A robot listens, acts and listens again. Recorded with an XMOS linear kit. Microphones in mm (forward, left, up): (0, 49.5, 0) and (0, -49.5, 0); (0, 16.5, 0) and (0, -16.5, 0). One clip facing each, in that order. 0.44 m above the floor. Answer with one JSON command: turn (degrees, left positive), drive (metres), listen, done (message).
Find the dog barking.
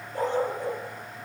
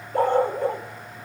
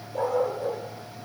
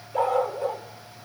{"turn": -60}
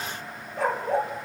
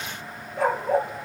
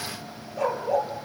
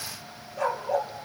{"done": "Facing the dog barking, 2 to 4 m away."}